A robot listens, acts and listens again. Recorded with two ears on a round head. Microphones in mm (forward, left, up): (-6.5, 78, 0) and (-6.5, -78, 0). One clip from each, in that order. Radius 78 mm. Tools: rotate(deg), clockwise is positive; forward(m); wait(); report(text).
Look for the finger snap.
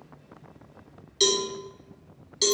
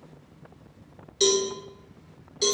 wait()
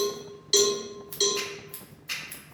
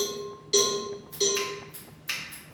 rotate(55)
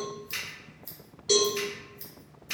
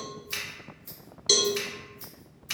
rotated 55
rotate(45)
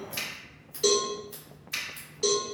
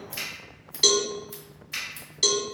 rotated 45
rotate(-15)
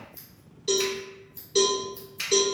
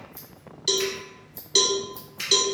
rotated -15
report("Found it: a finger snap, straight ahead, 1 to 2 m away.")